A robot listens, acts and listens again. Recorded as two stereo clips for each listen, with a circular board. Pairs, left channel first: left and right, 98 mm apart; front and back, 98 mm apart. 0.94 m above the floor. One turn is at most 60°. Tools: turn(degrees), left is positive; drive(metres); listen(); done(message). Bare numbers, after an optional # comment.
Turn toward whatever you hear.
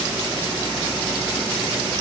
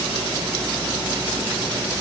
listen()
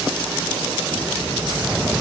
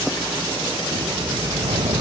# The whoosh: 175° right.
turn(-60)
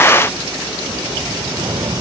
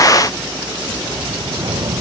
# The whoosh is now 135° right.
turn(-60)
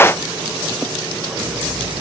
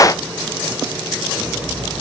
# Nothing new. It was at 75° right.
turn(-60)
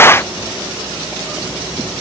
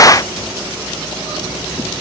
# Nothing new. It was at 15° right.
turn(-15)
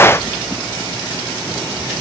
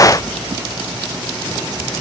done("Facing where the whoosh came from. I can't hear it now.")